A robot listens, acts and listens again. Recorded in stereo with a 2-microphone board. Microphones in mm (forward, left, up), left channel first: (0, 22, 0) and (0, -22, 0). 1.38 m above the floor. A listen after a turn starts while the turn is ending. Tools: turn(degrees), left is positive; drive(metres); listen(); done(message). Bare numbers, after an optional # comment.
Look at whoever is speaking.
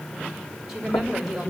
turn(-30)
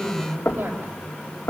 # So it is at 140° right.
turn(-140)
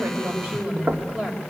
# The woman speaking is now 20° right.
turn(-20)
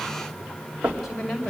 done("Found it: a woman speaking, straight ahead, over 4 m away.")